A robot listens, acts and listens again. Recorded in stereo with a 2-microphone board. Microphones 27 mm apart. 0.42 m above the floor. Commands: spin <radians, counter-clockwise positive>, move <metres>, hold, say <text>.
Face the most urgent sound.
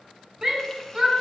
spin -0.35
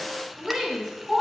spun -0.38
say Facing the shout, over 4 m away.